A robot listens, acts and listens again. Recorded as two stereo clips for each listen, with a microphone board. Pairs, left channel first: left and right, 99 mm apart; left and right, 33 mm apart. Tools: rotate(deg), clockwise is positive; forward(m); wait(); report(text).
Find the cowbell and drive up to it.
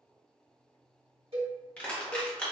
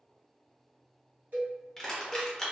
rotate(60)
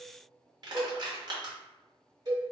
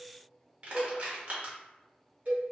rotate(50)
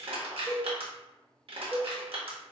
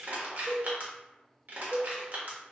rotate(25)
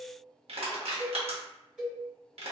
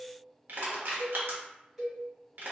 rotate(10)
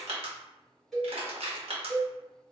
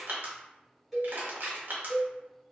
forward(1.0)
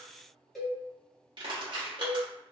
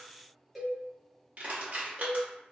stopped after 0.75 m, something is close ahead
report("Arrived at the cowbell, straight ahead.")